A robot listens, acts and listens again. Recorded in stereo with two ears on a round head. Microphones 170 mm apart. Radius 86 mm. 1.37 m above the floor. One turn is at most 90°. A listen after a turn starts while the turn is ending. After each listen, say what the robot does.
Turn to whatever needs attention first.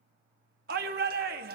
Turn 50° right.
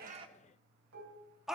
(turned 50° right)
Found it: a shout, straight ahead, 1 to 2 m away.